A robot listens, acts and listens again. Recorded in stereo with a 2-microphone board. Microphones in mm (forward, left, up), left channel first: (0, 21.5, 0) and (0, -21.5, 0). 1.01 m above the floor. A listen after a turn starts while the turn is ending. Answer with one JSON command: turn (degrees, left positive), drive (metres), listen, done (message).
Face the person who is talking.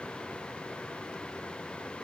{"listen": true}
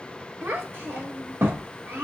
{"turn": -75}
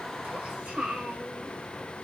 {"turn": -25}
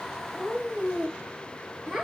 {"done": "Found it: a child speaking, straight ahead."}